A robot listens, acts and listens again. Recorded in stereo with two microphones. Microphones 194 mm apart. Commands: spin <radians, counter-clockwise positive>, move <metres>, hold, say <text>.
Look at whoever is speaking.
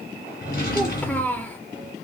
spin 0.52
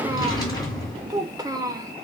spin -0.35
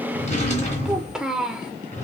say Found it: a child speaking, straight ahead.